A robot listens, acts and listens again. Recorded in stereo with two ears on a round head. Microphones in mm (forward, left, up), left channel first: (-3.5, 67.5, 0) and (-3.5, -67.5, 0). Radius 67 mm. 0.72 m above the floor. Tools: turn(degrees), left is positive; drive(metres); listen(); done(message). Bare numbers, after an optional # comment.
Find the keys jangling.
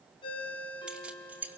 turn(-30)
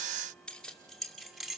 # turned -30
turn(-30)
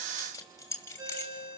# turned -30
# So it is at 15° left.
turn(15)
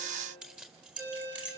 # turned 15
# The keys jangling is now 10° right.
turn(-10)
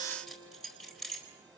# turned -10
done("Facing the keys jangling.")